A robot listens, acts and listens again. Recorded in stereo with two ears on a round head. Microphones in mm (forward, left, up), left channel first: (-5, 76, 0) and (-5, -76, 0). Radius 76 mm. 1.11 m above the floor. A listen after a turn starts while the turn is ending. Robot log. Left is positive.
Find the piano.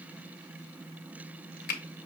cmd idle
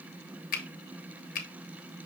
cmd idle
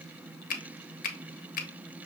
end: I can't make out a piano to turn to.